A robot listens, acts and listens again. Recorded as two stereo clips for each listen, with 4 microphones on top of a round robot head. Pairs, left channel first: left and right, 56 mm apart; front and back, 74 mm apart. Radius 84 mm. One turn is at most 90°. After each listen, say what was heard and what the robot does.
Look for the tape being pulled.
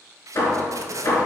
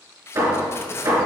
The tape being pulled: 60° right. Turn 60° right.
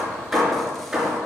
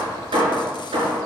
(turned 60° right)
Keep listening.
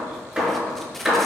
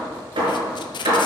Facing the tape being pulled.